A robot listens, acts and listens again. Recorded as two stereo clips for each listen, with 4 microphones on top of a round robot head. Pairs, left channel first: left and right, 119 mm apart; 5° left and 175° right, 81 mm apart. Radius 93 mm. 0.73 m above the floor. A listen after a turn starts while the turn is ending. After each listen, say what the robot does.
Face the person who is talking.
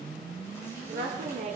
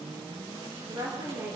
Turn 115° right.
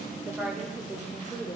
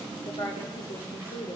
Turn 10° left.
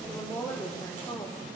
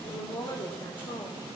Turn 15° left.
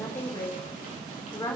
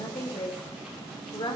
Turn 25° left.
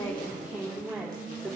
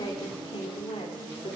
Turn 10° right.
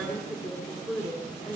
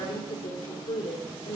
Facing the woman speaking.